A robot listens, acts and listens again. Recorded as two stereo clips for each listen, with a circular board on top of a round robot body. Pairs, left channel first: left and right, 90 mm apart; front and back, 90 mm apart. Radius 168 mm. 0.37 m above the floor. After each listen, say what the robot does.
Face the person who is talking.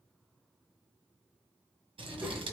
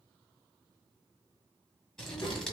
Turn 30° right.
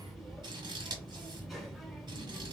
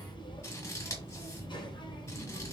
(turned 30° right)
Found it: a child speaking, straight ahead, 1 to 2 m away.